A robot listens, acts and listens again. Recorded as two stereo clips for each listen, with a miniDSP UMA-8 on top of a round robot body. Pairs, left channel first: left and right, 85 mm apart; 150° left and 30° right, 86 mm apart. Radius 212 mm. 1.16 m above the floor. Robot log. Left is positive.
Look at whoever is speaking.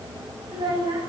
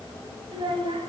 note: The child speaking: 65° right.
cmd yaw -65
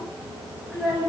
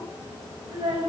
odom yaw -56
end: Found it: a child speaking, straight ahead.